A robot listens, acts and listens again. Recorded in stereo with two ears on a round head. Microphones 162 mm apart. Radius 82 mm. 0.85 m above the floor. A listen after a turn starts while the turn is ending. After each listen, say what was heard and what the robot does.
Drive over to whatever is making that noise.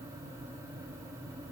Keep listening.
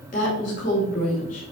The woman speaking: about 45° left or 135° left. Turn 45° left.
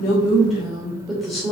Drive 1.0 m forward.
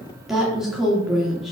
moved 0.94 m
Drive 1.0 m forward.
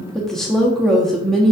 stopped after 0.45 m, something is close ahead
I am next to the woman speaking.